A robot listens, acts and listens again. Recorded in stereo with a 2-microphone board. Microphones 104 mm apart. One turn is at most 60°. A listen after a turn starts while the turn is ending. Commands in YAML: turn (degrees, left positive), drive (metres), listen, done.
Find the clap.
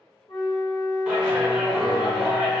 turn: -30
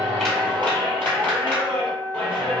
turn: 15
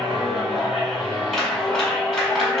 done: "Facing the clap, 1 to 2 m away."